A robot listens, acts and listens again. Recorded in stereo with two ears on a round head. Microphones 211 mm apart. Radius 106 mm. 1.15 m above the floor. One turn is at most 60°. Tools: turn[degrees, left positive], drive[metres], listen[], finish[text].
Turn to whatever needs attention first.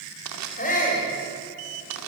Thought: The shout: about 35° left or 145° left.
Action: turn[35]
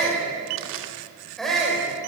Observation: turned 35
Action: finish[Found it: a shout, straight ahead.]